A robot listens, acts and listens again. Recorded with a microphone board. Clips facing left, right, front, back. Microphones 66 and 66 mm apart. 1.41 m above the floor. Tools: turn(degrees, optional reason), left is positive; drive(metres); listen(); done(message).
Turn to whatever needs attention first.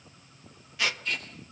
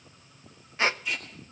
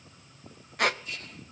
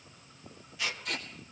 listen()
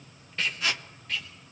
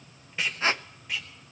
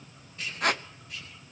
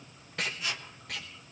listen()
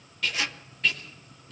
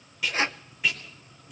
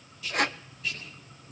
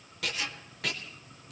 done("I can't make out anything urgent to turn to.")